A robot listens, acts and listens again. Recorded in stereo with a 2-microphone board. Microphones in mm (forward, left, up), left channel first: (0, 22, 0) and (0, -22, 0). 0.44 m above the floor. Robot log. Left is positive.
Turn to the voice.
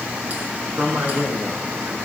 cmd yaw -90
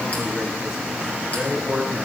end: Found it: a man speaking, straight ahead, over 4 m away.